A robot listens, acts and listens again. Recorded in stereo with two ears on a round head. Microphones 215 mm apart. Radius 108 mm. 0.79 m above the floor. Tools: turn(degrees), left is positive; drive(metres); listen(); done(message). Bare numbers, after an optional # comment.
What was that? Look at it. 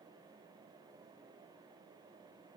listen()
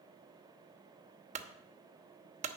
# The clunk: about 30° right or 150° right.
turn(-30)
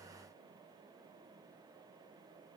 listen()
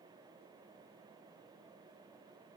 done("I heard a clunk, but can't make it out now. It was about straight ahead or 120° right.")